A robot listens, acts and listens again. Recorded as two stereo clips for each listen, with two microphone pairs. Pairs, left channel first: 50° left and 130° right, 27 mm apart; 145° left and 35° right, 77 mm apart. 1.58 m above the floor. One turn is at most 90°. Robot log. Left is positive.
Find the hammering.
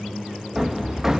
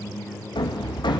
note: The hammering: 155° left.
cmd yaw +90
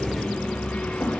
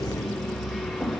note: The hammering is now 60° left.
cmd yaw +60
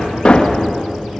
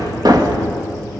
end: Found it: hammering, straight ahead.